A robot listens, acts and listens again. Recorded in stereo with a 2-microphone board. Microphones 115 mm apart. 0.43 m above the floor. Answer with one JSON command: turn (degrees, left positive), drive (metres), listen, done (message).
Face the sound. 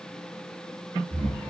{"turn": -90}
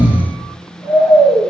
{"turn": -15}
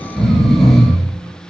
{"done": "Found it: snoring, straight ahead."}